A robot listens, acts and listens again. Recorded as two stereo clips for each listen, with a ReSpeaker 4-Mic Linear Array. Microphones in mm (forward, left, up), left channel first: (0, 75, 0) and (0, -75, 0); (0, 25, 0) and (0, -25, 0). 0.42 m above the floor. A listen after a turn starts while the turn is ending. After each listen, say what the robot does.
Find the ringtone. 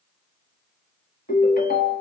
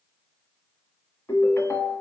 Turn 90° left.
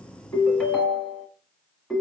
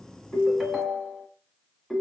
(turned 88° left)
Found it: a ringtone, straight ahead.